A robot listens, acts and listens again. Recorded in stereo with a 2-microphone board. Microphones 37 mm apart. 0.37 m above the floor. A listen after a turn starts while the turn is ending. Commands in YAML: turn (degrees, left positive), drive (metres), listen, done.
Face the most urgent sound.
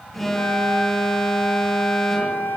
turn: 30
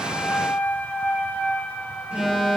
turn: -25
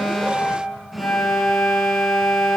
done: "Found it: an alarm, straight ahead, over 4 m away."